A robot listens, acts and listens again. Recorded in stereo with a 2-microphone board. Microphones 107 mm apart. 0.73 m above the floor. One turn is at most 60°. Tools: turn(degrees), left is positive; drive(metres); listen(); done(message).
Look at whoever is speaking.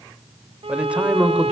turn(degrees=-30)
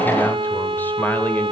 turn(degrees=15)
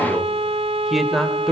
done("Facing the man speaking, 2 to 4 m away.")